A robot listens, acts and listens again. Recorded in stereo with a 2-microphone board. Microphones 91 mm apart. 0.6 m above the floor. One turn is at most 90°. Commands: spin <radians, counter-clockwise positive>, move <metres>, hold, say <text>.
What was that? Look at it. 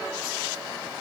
hold
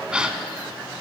spin -0.52
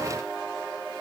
hold
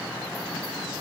say I heard a gasp, but can't make it out now. It was about 20° left or 140° right.